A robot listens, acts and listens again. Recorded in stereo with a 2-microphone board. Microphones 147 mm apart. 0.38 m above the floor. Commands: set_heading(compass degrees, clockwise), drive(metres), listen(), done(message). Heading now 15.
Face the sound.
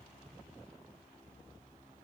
listen()
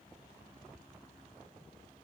listen()
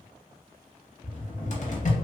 set_heading(325)
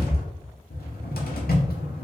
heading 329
set_heading(249)
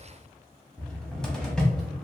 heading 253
done("Found it: a cupboard door, straight ahead, under 1 m away.")